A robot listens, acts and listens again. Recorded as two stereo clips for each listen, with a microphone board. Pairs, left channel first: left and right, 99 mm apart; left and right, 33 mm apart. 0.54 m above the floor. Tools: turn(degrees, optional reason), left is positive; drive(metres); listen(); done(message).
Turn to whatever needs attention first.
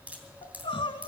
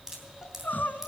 turn(degrees=70, reason="The crying: about 70° left or 110° left.")
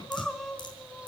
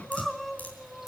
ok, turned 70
done("Facing the crying.")